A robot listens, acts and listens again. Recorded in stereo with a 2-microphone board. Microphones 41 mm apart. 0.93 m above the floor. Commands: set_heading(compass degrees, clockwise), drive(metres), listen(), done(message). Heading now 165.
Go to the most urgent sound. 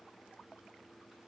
listen()
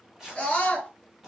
set_heading(140)
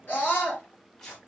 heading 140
set_heading(10)
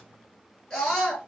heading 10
set_heading(350)
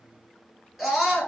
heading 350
drive(1.0)
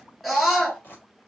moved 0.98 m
set_heading(340)
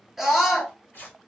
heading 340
drive(1.0)
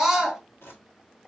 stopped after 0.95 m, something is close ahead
done("Arrived at the scream, straight ahead.")